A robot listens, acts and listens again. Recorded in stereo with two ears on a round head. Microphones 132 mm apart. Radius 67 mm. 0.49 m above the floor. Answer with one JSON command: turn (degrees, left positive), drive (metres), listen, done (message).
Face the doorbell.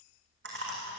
{"listen": true}
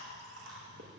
{"listen": true}
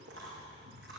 {"done": "I can't make out a doorbell to turn to."}